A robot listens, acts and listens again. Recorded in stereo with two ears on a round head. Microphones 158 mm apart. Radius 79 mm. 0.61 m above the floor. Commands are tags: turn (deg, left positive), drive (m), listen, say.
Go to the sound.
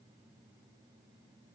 <listen/>
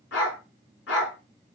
<turn deg="90"/>
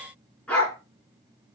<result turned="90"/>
<drive m="1.0"/>
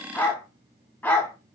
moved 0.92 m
<turn deg="10"/>
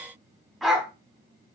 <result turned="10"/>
<drive m="1.0"/>
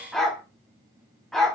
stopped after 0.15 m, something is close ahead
<say>I am next to the dog barking.</say>